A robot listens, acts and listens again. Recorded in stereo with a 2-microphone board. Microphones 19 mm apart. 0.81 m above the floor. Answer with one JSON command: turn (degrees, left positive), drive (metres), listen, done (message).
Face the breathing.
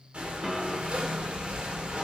{"turn": -60}
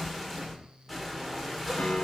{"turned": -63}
{"done": "Facing the breathing, 1 to 2 m away."}